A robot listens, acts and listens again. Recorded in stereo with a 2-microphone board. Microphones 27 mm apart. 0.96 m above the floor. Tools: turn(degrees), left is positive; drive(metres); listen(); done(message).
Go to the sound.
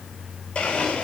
turn(degrees=50)
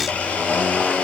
turn(degrees=80)
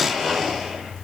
drive(metres=1.0)
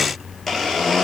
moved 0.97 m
drive(metres=1.0)
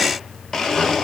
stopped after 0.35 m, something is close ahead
turn(degrees=10)
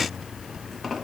done("Arrived at the blender, straight ahead.")